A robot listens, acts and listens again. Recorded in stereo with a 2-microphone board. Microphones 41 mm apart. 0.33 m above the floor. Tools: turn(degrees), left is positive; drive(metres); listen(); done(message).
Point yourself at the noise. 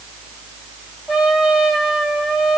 turn(degrees=-15)
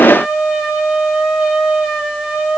turn(degrees=-150)
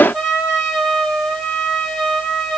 turn(degrees=15)
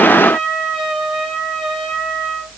done("Facing the trumpet.")